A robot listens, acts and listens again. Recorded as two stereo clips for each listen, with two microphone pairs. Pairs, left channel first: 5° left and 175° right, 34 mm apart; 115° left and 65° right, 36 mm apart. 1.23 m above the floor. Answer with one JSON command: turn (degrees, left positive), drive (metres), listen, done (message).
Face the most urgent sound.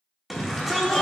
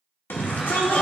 {"turn": 100}
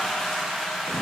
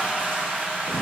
{"listen": true}
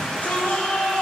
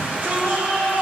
{"turn": -35}
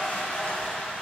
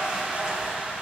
{"listen": true}
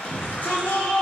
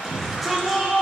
{"turn": 20}
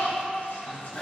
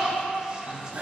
{"done": "Facing the shout, 1 to 2 m away."}